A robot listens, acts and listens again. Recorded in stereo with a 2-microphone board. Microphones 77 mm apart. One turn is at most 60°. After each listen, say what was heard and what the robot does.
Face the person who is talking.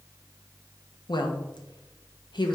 The woman speaking: about 70° left or 110° left. Turn 60° left.
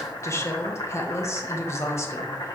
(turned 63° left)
So it is at 40° left. Turn 40° left.
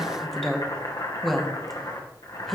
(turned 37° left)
Found it: a woman speaking, straight ahead, 1 to 2 m away.